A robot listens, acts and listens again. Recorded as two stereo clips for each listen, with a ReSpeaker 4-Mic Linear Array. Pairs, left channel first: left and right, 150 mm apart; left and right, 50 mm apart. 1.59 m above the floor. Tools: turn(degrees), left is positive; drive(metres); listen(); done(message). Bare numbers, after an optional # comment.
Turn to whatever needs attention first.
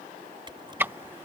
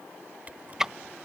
listen()
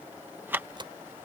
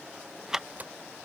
listen()
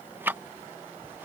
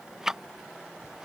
done("I can't make out anything urgent to turn to.")